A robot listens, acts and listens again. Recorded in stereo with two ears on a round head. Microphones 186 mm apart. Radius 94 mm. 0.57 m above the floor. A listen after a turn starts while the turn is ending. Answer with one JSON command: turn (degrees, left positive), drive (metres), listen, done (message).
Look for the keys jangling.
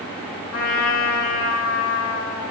{"listen": true}
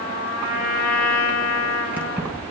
{"turn": -30}
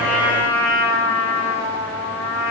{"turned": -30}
{"listen": true}
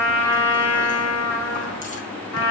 {"listen": true}
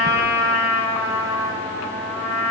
{"done": "I heard keys jangling, but can't make it out now. It was about 25° left or 145° right."}